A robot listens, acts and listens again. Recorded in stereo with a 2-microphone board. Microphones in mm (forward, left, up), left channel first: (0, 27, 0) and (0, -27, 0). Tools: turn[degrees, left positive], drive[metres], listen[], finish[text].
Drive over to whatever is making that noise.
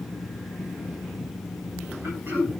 Thought: The throat clearing: about 40° right or 140° right.
Action: turn[-40]
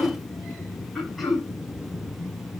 Action: drive[1.0]
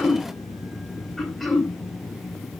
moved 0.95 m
Action: drive[1.0]
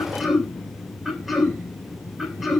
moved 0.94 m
Action: drive[1.0]
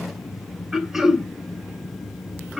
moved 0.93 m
Thought: The throat clearing is now 10° right.
Action: turn[-10]
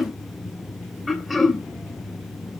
Action: drive[1.0]
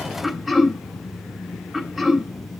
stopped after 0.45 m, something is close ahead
Action: finish[I am next to the throat clearing.]